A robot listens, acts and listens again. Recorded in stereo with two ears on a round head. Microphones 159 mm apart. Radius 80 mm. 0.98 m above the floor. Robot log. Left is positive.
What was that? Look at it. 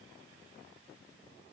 cmd idle
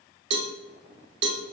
note: The cowbell: about 70° right or 110° right.
cmd yaw -70
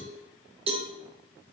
note: So it is at 35° right.
cmd yaw -35
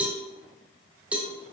note: The cowbell is now 10° right.
cmd yaw -10
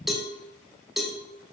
end: Facing the cowbell.